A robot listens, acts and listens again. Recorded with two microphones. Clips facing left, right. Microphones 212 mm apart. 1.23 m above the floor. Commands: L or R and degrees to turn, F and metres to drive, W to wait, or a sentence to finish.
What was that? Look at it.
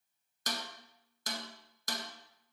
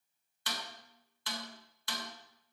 L45
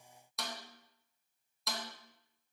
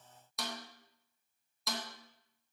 Facing the snare drum, under 1 m away.